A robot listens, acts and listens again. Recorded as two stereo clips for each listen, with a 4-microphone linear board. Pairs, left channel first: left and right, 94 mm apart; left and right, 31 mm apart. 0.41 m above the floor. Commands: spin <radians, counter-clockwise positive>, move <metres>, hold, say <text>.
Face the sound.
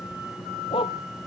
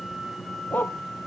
spin 1.22
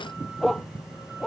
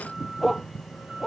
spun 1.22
say Facing the dog barking.